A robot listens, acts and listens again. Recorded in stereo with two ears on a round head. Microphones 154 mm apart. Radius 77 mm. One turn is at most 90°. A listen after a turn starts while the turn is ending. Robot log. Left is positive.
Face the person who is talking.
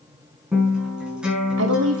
cmd yaw -90
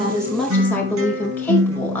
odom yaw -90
note: So it is at 10° left.
cmd yaw +10
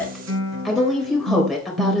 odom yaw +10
end: Facing the woman speaking.